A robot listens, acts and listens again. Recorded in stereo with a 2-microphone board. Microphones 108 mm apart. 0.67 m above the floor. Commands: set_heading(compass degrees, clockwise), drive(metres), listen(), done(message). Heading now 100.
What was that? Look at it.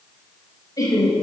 set_heading(70)
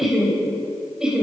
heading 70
set_heading(80)
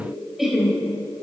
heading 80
done("Found it: laughter, straight ahead, 2 to 4 m away.")